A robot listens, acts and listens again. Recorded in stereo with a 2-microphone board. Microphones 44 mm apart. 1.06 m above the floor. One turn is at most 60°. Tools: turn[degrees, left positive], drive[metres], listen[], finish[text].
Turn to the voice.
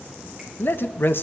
Thought: The man speaking: about 50° left or 130° left.
Action: turn[50]
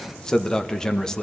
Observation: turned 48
Thought: So it is at 10° left.
Action: turn[10]
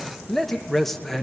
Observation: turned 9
Action: finish[Found it: a man speaking, straight ahead.]